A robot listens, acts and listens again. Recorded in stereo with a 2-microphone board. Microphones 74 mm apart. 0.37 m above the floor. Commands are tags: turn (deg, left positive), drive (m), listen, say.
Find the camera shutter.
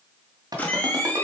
<turn deg="20"/>
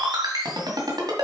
<listen/>
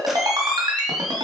<say>Facing the camera shutter.</say>